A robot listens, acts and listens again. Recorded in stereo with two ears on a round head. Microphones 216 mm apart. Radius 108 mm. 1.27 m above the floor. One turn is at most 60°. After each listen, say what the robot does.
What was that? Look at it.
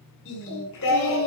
Turn 60° left.
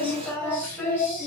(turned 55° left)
Facing the singing, over 4 m away.